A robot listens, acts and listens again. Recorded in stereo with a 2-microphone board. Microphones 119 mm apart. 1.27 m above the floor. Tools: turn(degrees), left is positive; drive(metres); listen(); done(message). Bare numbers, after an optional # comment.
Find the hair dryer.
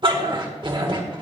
listen()
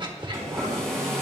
turn(30)
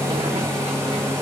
# So it is at 30° right.
turn(-30)
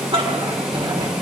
done("Facing the hair dryer, over 4 m away.")